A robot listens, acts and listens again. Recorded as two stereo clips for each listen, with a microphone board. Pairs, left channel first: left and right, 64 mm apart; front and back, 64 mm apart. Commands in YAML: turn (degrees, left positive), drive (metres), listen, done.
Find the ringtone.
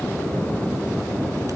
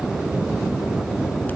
listen: true
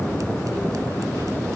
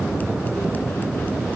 listen: true
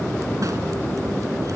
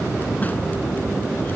done: "I can't make out a ringtone to turn to."